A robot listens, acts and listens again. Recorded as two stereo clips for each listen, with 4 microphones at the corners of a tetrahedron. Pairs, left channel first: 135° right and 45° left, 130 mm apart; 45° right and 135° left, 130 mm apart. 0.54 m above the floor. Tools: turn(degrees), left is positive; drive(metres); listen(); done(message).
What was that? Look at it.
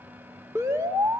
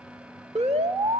turn(degrees=115)
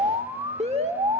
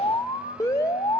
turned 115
turn(degrees=20)
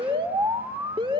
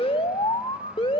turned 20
done("Found it: an alarm, straight ahead, 1 to 2 m away.")